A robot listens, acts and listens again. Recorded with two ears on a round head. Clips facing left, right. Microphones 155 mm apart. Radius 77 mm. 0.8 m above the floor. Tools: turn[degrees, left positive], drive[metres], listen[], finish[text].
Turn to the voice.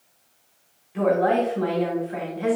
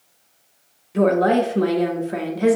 Thought: The woman speaking: about 55° right or 125° right.
Action: turn[-55]
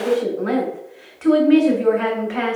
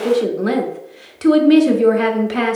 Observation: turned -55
Thought: So it is at 55° right.
Action: turn[-55]
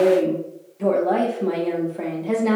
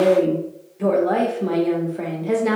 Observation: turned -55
Action: finish[Found it: a woman speaking, straight ahead.]